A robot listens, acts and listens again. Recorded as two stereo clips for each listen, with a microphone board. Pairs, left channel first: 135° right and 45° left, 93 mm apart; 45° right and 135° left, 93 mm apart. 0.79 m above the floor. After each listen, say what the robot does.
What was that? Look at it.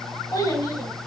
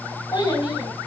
Turn 85° right.
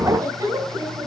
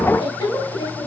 Turn 10° right.
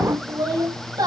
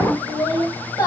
Facing the child speaking.